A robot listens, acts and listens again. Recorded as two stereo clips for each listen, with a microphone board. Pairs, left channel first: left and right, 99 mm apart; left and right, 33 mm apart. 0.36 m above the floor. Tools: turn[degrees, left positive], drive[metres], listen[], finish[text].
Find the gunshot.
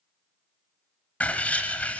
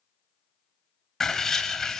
Action: listen[]
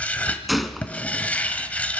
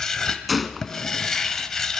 Action: turn[30]
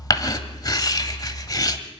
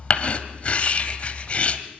Action: listen[]
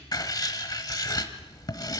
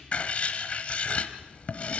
Action: finish[I heard a gunshot, but can't make it out now. It was about 30° right or 150° left.]